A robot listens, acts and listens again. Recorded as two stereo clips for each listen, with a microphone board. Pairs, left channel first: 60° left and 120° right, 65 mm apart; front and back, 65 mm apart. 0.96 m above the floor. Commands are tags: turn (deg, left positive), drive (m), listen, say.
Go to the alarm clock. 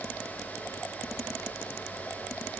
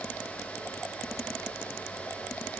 <listen/>
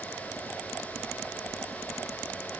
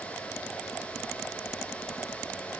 <listen/>
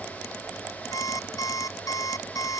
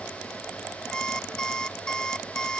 <turn deg="75"/>
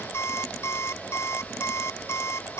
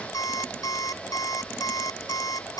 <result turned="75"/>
<turn deg="15"/>
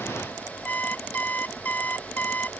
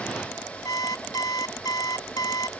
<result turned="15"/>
<drive m="1.0"/>
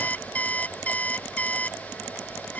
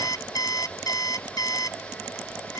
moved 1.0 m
<drive m="1.0"/>
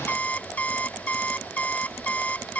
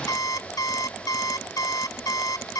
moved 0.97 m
<drive m="1.0"/>
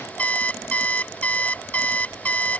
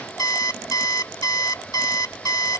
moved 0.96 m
<drive m="1.0"/>
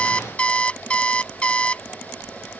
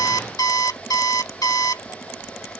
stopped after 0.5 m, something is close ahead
<turn deg="-10"/>
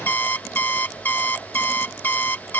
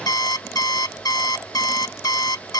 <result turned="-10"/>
<say>I am next to the alarm clock.</say>